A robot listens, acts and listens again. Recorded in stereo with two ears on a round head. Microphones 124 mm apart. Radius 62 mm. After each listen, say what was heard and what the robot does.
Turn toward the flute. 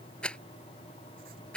Keep listening.
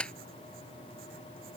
Keep listening.
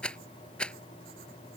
I can't make out a flute to turn to.